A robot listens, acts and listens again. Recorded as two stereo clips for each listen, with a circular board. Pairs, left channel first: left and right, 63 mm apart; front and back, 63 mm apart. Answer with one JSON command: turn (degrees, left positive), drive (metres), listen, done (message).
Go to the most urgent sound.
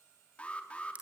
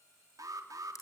{"turn": 160}
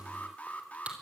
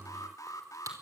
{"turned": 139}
{"turn": 25}
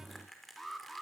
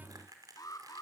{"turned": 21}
{"drive": 1.0}
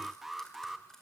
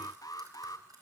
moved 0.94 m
{"drive": 1.0}
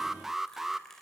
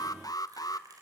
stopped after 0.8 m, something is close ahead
{"done": "Arrived at the alarm, straight ahead."}